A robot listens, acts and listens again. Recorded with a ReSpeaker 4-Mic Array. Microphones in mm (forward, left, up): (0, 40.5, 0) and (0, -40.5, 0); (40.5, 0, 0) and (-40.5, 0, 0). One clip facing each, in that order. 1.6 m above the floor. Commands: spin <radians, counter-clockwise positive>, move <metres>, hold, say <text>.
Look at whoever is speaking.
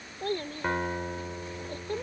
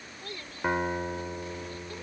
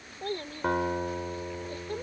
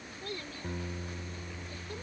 spin 0.79
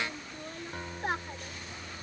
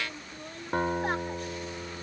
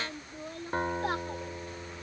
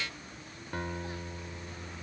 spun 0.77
say Facing the child speaking.